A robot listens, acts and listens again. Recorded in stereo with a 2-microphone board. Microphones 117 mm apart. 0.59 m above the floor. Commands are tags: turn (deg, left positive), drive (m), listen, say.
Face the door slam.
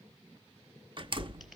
<turn deg="-45"/>
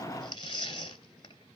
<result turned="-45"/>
<listen/>
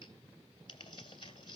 <say>I heard a door slam, but can't make it out now. It was about straight ahead or 90° right.</say>